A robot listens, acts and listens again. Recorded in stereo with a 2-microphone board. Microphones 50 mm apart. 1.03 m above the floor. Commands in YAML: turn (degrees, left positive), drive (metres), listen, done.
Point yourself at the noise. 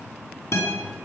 turn: 70
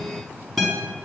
done: "Facing the guitar, over 4 m away."